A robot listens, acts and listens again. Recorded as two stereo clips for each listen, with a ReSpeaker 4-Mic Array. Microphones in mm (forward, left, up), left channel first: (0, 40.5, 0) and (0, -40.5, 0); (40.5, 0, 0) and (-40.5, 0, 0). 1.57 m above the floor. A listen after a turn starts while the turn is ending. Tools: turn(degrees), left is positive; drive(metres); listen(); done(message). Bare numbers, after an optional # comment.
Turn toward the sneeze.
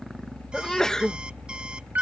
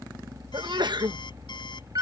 # The sneeze: 170° left.
turn(170)
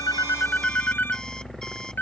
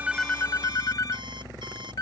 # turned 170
done("Facing where the sneeze came from. I can't hear it now.")